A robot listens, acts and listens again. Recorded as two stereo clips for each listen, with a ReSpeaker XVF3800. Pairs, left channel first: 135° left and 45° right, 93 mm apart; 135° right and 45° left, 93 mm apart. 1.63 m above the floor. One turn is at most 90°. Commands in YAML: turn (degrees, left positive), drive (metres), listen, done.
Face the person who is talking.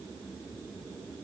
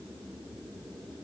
listen: true
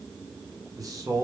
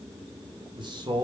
turn: 10
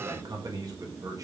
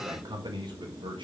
turn: 10
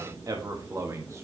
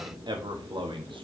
turn: 15
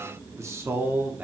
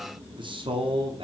turn: 25
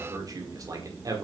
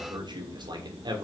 done: "Facing the man speaking."